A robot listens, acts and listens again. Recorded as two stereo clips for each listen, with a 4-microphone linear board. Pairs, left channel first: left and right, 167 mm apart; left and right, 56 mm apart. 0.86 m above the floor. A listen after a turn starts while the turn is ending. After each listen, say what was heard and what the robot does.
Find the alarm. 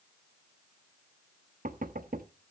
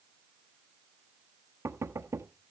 Keep listening.
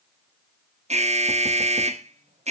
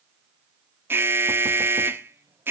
The alarm: about 45° right or 135° right. Turn 45° right.
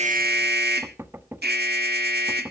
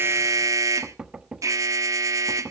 So it is at 95° right. Turn 95° right.
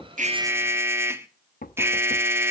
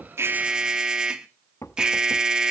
The alarm is now 15° right. Turn 15° right.
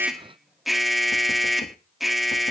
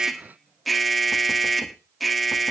Found it: an alarm, straight ahead.